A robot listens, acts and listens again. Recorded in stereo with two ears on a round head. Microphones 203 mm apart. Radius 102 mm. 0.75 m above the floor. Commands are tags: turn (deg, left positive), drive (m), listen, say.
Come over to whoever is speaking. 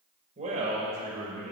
<turn deg="-30"/>
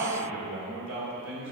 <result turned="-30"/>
<turn deg="-120"/>
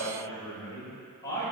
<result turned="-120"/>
<turn deg="15"/>
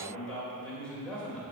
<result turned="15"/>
<drive m="1.0"/>
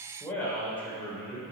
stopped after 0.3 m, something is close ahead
<turn deg="10"/>
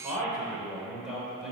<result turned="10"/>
<say>Something is in my way. I am facing the man speaking but have not reached it.</say>